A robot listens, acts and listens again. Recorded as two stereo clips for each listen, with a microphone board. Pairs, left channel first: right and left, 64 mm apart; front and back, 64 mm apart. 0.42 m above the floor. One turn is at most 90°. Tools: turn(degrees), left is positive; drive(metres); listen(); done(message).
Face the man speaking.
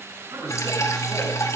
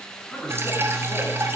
turn(degrees=80)
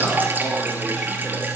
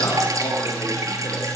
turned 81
listen()
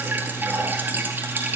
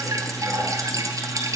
listen()
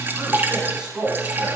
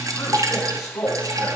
turn(degrees=15)
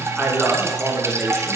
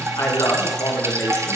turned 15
done("Facing the man speaking, over 4 m away.")